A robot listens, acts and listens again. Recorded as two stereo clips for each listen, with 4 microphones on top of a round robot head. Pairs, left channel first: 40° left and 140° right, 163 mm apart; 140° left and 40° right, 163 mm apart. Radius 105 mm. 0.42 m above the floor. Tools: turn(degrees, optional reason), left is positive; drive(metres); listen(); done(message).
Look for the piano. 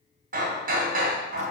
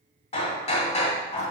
listen()
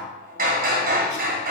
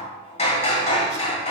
listen()
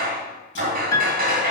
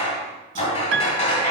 turn(degrees=-30, reason="The piano: 30° right.")
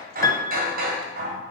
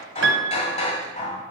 turn(degrees=-30, reason="The piano is now 30° right.")
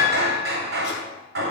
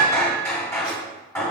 done("Found it: a piano, straight ahead, under 1 m away.")